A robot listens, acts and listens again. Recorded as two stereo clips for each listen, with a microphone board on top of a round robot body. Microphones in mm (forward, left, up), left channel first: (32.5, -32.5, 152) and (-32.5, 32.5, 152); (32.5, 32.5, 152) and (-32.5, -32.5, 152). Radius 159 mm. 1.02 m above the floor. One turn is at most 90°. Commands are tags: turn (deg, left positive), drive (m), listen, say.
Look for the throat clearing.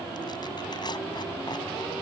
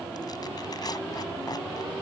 <listen/>
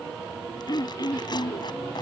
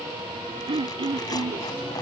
<turn deg="-90"/>
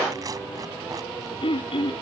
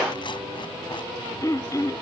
<turn deg="-10"/>
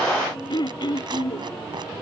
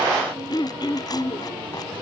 <say>Facing the throat clearing.</say>